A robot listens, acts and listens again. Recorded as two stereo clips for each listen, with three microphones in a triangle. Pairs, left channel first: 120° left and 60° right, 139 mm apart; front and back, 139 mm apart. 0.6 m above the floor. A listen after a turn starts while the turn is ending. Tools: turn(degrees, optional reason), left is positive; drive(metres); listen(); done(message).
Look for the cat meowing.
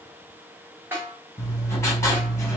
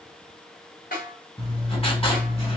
listen()
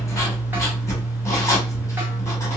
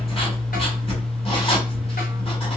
listen()
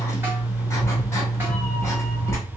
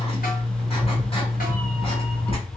turn(degrees=25, reason="The cat meowing: 25° left.")
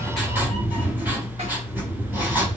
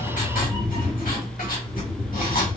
done("Found it: a cat meowing, straight ahead.")